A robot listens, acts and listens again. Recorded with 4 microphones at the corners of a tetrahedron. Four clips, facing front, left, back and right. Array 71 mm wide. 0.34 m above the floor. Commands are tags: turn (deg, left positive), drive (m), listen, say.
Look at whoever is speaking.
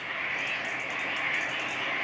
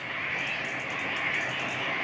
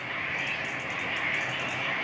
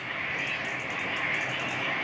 <listen/>
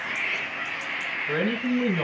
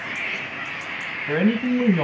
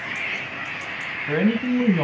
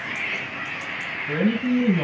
<turn deg="125"/>
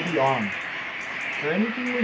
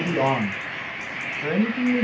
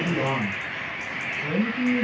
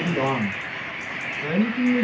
<turn deg="25"/>
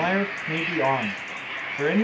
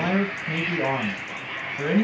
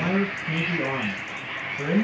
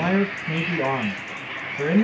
<turn deg="-15"/>
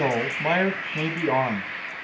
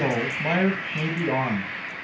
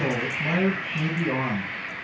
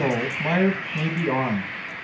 <say>Found it: a man speaking, straight ahead.</say>